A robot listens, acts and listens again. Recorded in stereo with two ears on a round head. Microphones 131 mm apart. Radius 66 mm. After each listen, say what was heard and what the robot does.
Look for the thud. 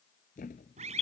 The thud: about 55° left or 125° left. Turn 55° left.
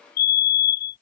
Keep listening.
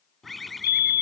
I heard a thud, but can't make it out now. It was about straight ahead or 70° left.